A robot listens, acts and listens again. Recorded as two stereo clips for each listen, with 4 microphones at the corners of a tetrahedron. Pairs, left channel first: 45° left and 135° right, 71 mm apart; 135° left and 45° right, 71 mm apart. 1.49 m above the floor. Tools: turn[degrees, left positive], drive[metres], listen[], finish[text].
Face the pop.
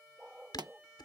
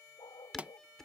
Thought: The pop: 115° right.
Action: turn[-115]
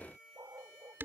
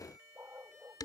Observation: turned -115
Action: finish[I heard a pop from this way, but can't make it out now.]